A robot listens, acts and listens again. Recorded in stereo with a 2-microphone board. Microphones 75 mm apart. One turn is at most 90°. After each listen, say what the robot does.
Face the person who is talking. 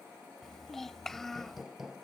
Turn 30° left.
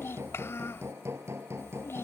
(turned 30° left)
Turn 90° left.
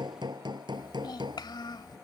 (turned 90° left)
Turn 80° left.
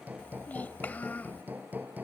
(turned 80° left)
Turn 25° left.
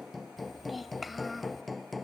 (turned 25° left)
Facing the child speaking.